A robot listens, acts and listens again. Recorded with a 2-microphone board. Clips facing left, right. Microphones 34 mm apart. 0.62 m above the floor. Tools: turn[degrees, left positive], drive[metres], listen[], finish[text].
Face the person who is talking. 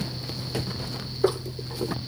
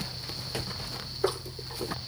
Action: listen[]
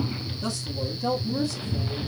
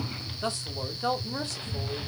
Thought: The man speaking: about 60° right or 120° right.
Action: turn[-60]
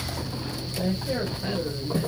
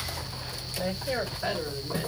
Thought: So it is at 50° right.
Action: turn[-50]
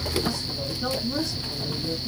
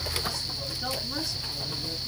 Action: finish[Found it: a man speaking, straight ahead, 2 to 4 m away.]